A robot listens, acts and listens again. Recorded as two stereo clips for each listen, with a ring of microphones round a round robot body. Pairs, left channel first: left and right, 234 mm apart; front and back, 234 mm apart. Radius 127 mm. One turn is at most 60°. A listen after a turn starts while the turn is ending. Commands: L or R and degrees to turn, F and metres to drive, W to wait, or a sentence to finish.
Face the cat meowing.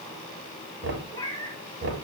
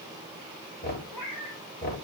L20
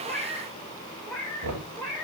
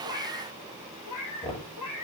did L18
L10
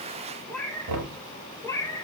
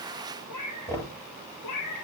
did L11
L15
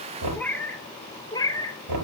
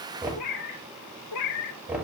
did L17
L15
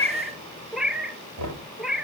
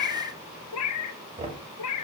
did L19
Found it: a cat meowing, straight ahead, 1 to 2 m away.